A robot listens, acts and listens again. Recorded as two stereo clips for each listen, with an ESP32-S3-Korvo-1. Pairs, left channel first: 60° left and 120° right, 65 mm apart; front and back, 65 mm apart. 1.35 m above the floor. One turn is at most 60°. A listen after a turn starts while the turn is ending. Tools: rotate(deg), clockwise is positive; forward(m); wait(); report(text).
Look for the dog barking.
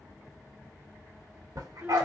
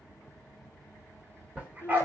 rotate(60)
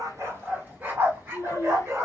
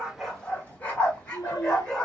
rotate(60)
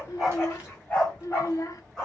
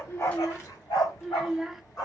rotate(20)
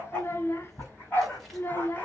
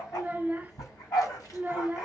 report("Facing the dog barking, 2 to 4 m away.")